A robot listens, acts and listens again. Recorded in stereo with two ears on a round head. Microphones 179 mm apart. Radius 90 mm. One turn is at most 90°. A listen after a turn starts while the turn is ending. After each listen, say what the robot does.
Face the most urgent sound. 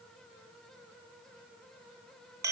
Keep listening.
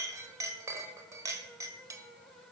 Keep listening.
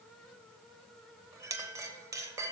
I can't make out anything urgent, only a clink.